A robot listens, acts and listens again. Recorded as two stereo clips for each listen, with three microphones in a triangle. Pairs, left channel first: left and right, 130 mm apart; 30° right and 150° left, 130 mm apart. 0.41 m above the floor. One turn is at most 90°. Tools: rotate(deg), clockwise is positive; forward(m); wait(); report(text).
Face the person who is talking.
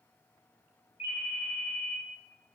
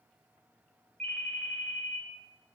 wait()
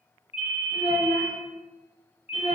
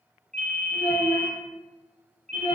rotate(-90)
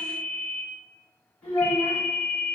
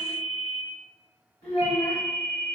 rotate(-15)
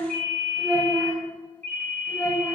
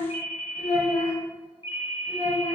report("Found it: a child speaking, straight ahead.")